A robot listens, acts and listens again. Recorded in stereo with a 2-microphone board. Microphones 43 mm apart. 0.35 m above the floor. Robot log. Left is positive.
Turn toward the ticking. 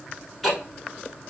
cmd yaw +30
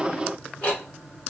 note: So it is at 150° left.
cmd yaw +150
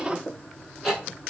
end: Facing the ticking, 1 to 2 m away.